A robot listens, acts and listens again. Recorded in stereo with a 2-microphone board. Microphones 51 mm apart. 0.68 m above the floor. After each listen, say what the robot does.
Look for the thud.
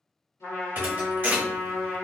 Turn 45° right.
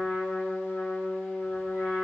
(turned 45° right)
Keep listening.
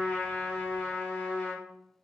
I heard a thud, but can't make it out now. It was about straight ahead or 90° right.